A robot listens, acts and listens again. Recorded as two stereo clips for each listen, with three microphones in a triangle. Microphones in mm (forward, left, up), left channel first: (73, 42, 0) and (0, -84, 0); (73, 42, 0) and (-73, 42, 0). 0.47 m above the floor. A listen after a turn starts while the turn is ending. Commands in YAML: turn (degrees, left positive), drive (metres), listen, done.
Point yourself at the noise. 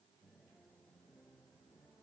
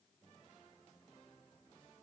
listen: true
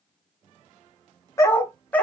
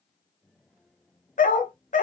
turn: -20
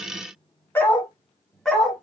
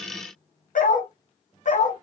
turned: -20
turn: -30
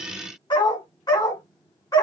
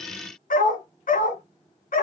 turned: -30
done: "Found it: a dog barking, straight ahead."